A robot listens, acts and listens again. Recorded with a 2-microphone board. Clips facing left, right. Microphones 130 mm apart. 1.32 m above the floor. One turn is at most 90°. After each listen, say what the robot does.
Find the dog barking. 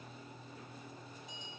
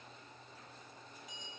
Keep listening.
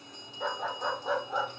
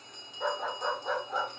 Turn 30° left.
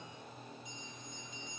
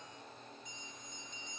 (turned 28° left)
Keep listening.
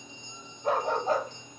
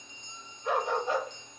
Turn 90° left.
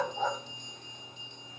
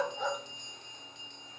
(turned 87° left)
Turn 45° left.
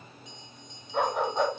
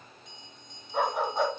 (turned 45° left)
Found it: a dog barking, straight ahead, over 4 m away.